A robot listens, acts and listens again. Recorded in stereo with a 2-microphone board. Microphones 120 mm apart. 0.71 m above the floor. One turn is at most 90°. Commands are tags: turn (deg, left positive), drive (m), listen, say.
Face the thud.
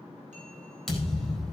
<turn deg="30"/>
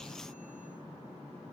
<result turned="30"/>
<listen/>
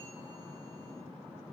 <say>I heard a thud, but can't make it out now. It was about 30° right or 150° left.</say>